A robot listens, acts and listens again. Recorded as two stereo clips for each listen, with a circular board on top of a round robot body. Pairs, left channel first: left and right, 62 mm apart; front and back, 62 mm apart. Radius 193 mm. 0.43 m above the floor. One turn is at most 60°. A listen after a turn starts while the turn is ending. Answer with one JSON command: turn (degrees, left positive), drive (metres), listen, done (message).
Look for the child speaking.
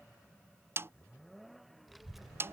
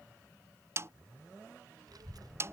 {"turn": -60}
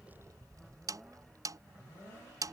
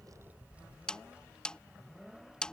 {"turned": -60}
{"turn": -60}
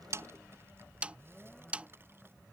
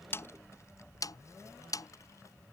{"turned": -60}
{"turn": -40}
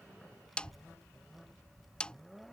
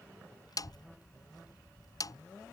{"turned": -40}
{"done": "Found it: a child speaking, straight ahead."}